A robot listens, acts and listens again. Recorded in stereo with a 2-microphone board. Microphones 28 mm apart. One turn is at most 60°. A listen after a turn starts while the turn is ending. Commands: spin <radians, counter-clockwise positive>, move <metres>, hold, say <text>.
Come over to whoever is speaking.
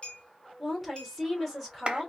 spin 0.52
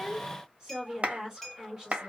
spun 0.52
spin -0.52
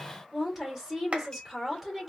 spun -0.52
move 1.0
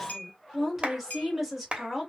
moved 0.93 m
spin -0.17
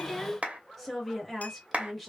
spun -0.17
move 1.0
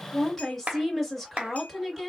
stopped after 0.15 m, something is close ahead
spin 0.17
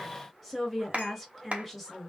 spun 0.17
say I am next to the woman speaking.